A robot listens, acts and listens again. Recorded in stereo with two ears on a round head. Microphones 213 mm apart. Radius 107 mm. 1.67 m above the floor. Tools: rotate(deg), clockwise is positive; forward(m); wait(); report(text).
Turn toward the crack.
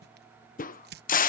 rotate(-35)
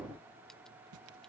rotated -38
wait()
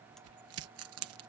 report("I heard a crack, but can't make it out now. It was about straight ahead or 105° left.")